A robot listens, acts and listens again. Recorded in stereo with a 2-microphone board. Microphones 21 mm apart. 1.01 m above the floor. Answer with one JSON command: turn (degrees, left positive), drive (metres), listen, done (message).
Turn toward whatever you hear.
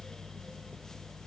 {"listen": true}
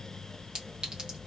{"turn": -45}
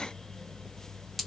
{"done": "Found it: a clink, straight ahead, 1 to 2 m away."}